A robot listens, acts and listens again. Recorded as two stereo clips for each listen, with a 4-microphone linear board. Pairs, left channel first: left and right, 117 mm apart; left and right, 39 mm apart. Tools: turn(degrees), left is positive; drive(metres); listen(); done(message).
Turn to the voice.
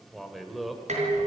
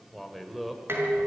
turn(degrees=30)
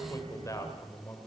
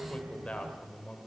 turn(degrees=150)
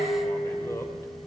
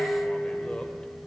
listen()
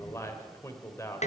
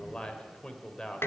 turn(degrees=25)
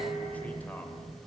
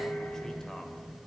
listen()
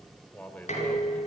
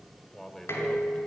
turn(degrees=15)
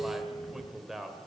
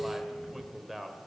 done("Found it: a man speaking, straight ahead, 2 to 4 m away.")